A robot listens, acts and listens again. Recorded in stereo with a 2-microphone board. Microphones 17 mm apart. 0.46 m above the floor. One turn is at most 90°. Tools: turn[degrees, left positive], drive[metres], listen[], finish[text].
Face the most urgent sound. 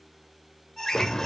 Thought: The alarm: about 25° left or 155° left.
Action: turn[25]
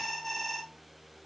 Action: finish[Facing the alarm.]